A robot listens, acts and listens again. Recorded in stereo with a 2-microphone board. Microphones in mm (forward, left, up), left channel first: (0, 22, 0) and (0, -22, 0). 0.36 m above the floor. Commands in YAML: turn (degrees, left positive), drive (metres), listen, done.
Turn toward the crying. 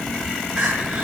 turn: -20
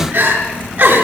turn: -140
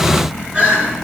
turn: -25
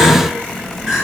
turn: -10
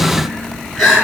done: "Facing the crying."